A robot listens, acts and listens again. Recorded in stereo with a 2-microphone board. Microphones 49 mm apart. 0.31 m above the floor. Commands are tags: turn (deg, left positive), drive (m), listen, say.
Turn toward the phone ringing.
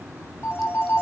<turn deg="50"/>
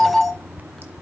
<say>Facing the phone ringing.</say>